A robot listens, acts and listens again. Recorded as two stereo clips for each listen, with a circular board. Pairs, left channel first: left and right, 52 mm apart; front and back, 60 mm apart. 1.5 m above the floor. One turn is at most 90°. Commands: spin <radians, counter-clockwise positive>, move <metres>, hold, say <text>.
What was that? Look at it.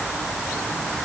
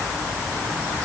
hold
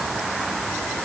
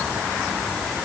hold
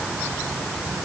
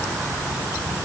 say I can't make out anything to turn to.